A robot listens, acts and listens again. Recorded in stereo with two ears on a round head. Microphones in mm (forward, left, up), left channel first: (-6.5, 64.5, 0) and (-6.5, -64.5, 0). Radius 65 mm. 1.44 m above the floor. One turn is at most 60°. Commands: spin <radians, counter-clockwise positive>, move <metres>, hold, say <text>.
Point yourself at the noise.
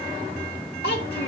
spin 1.05
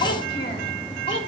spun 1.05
spin 0.70
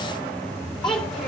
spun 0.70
say Facing the child speaking.